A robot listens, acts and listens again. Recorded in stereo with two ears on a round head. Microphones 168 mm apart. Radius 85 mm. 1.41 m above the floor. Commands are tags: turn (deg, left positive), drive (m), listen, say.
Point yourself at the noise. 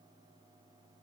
<listen/>
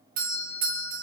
<turn deg="-45"/>
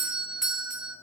<say>Facing the doorbell.</say>